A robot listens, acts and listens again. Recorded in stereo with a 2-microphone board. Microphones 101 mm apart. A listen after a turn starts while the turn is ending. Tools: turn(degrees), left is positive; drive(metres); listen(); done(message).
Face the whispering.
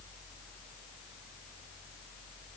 listen()
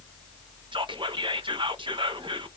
turn(degrees=-60)
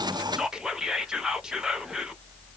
done("Found it: whispering, straight ahead.")